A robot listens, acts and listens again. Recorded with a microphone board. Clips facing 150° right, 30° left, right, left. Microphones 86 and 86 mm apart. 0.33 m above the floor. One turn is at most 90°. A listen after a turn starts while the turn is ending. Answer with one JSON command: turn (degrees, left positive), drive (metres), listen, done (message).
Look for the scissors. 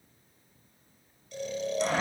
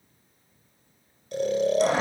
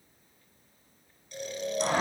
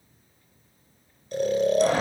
{"listen": true}
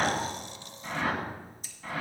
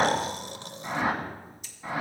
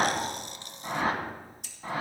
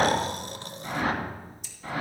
{"turn": -90}
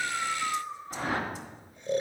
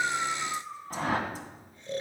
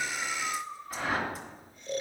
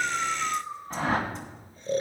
{"turn": -10}
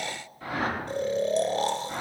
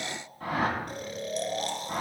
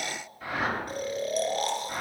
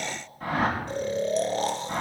{"listen": true}
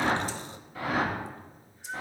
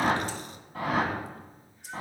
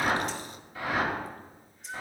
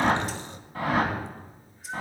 {"done": "I heard scissors from this way, but can't make it out now."}